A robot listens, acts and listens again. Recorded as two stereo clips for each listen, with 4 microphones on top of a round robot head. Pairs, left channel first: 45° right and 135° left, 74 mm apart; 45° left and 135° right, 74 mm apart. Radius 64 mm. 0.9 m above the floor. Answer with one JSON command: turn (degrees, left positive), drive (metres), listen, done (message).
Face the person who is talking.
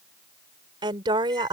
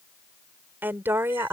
{"turn": 165}
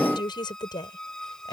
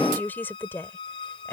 {"turn": -15}
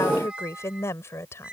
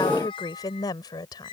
{"turn": 10}
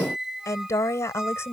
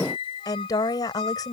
{"turn": 10}
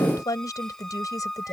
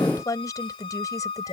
{"done": "Facing the woman speaking."}